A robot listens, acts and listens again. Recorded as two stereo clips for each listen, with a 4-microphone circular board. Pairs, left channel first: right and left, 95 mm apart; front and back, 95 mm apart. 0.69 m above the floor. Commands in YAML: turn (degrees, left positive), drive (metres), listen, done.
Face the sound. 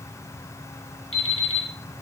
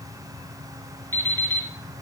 turn: -70
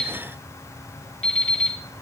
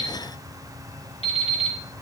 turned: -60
turn: -10
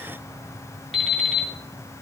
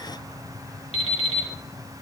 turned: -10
done: "Found it: an alarm clock, straight ahead."